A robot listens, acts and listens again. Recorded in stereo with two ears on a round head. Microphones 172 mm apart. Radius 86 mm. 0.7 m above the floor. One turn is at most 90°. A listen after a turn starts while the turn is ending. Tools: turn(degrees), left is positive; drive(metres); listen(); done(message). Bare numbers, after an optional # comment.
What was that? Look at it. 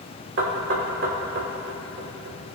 # The knocking: about 65° right or 115° right.
turn(-65)
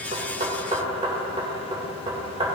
# So it is at 35° right.
turn(-35)
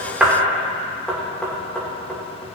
done("Facing the knocking, 2 to 4 m away.")